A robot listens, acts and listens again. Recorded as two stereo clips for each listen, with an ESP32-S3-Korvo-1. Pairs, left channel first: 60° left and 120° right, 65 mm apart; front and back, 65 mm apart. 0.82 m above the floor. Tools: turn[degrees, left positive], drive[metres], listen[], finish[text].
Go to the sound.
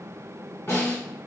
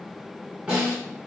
Thought: The snare drum: 115° left.
Action: turn[115]
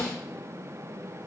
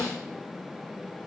Thought: The snare drum is now 10° right.
Action: turn[-10]
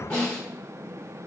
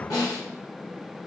Action: drive[1.0]
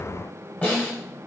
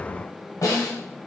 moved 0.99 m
Action: drive[1.0]
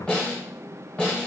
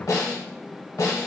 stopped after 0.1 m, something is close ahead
Thought: The snare drum is now 10° right.
Action: turn[-10]
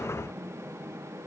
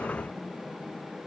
Action: listen[]
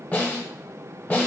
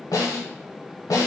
Action: finish[I am next to the snare drum.]